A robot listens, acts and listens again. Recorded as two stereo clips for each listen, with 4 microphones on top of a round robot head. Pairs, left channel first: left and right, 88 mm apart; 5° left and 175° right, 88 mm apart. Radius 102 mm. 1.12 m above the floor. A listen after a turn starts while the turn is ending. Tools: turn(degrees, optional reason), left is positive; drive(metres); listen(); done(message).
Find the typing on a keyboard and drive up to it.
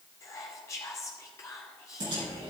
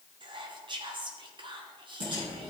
turn(degrees=-130, reason="The typing on a keyboard: 130° right.")
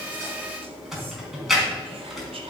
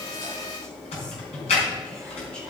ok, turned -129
drive(metres=1.0)
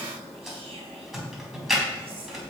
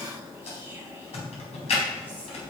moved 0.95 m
drive(metres=1.0)
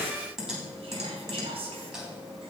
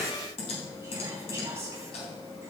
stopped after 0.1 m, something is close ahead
done("Something is in my way. I am facing the typing on a keyboard but have not reached it.")